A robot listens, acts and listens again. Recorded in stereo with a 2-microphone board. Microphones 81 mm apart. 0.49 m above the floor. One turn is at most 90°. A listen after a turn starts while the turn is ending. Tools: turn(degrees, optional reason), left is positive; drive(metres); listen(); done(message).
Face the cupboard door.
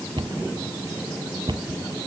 turn(degrees=-65, reason="The cupboard door: about 65° right or 115° right.")
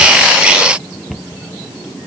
done("Facing the cupboard door.")